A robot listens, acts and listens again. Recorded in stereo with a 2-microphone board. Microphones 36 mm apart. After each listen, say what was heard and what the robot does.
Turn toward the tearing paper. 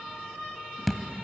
Keep listening.
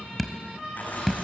The tearing paper: about 50° left or 130° left. Turn 50° left.
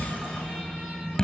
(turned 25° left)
Keep listening.
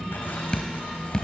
Keep listening.
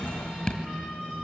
I heard tearing paper, but can't make it out now. It was about 25° left or 105° left.